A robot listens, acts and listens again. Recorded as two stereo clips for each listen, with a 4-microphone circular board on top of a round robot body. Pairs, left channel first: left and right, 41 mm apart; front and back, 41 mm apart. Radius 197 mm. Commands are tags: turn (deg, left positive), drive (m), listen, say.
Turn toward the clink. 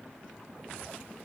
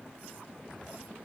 <listen/>
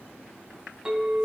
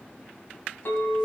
<turn deg="-20"/>
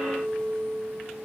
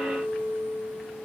<say>Found it: a clink, straight ahead, over 4 m away.</say>